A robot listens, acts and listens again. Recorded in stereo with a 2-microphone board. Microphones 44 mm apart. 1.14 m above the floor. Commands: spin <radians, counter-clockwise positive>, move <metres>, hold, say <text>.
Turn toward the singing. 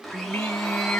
spin 0.79
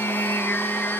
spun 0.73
spin 2.09
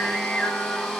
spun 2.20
spin 0.35
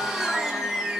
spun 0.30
spin 0.26
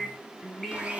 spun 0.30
spin 0.17
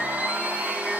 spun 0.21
hold
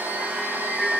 say Facing the singing, 2 to 4 m away.